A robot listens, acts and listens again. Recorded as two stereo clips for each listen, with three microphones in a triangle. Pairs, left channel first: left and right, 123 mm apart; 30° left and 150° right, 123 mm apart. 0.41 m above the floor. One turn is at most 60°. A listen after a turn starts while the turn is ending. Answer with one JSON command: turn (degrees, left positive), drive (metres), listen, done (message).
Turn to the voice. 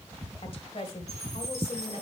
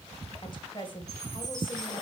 {"turn": 60}
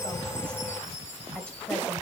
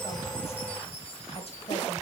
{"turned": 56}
{"turn": 10}
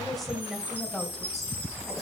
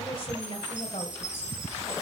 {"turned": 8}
{"done": "Facing the woman speaking, 1 to 2 m away."}